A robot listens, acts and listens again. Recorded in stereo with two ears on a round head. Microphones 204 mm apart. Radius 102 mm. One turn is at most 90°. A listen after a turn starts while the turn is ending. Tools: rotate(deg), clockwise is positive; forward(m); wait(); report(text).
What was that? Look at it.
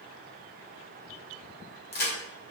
rotate(-45)
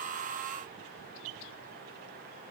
wait()
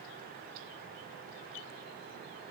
report("I heard a crack, but can't make it out now. It was about straight ahead or 90° left.")